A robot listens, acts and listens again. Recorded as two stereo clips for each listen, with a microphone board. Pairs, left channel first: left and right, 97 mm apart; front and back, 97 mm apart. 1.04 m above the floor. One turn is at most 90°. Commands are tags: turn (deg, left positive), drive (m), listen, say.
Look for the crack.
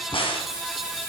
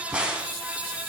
<turn deg="90"/>
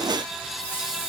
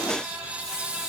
<turn deg="10"/>
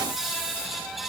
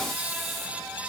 <say>I heard a crack from this way, but can't make it out now.</say>